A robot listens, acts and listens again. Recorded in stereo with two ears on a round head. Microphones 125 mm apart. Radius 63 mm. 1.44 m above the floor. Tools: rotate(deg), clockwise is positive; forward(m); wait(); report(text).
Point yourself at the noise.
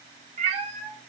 rotate(45)
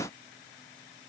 wait()
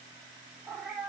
rotate(10)
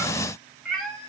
report("Found it: a cat meowing, straight ahead, 1 to 2 m away.")